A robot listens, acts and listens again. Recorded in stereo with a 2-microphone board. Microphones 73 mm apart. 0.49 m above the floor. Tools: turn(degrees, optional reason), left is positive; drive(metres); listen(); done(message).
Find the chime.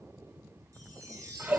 turn(degrees=-45, reason="The chime: about 45° right or 135° right.")
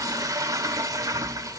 listen()
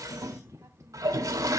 listen()
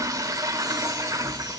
done("I heard a chime, but can't make it out now. It was about straight ahead or 90° right.")